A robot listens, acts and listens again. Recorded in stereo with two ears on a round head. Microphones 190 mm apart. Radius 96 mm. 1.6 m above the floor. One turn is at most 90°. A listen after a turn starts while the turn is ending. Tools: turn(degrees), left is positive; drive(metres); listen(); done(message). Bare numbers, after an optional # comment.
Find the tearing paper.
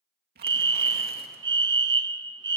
# The tearing paper: about 50° right or 130° right.
turn(-50)
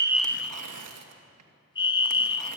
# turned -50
# So it is at 85° right.
turn(-85)
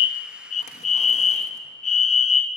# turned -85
listen()
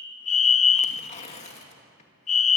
# The tearing paper is now 30° left.
turn(30)
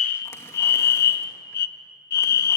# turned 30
listen()
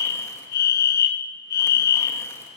listen()
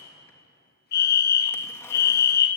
done("I heard tearing paper from this way, but can't make it out now.")